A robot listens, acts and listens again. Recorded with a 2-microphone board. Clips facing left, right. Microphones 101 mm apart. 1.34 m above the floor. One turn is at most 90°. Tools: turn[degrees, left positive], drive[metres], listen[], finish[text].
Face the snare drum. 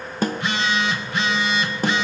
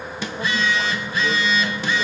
Thought: The snare drum: about 45° left or 135° left.
Action: turn[45]
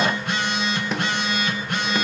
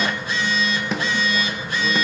Action: finish[Facing the snare drum, 1 to 2 m away.]